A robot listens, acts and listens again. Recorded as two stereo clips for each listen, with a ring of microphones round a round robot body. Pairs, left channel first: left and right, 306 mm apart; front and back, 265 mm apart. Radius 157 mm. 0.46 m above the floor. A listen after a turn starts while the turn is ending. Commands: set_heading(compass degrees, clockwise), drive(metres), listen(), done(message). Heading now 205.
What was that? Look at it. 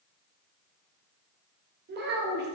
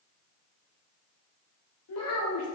set_heading(240)
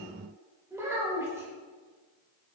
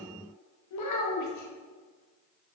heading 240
set_heading(250)
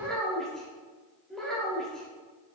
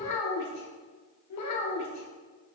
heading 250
done("Found it: a child speaking, straight ahead.")